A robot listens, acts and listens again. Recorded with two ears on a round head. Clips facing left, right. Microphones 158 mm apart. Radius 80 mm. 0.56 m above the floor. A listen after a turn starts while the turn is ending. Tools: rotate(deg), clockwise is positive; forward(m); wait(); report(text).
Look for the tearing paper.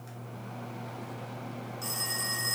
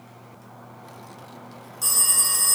wait()
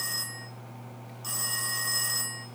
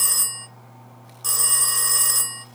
wait()
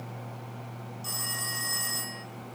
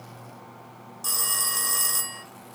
report("I can't make out tearing paper to turn to.")